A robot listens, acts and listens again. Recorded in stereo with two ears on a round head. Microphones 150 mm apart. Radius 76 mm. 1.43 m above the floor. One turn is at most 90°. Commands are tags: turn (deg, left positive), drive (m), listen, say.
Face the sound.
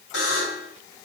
<turn deg="70"/>
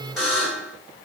<say>Facing the buzzer, 2 to 4 m away.</say>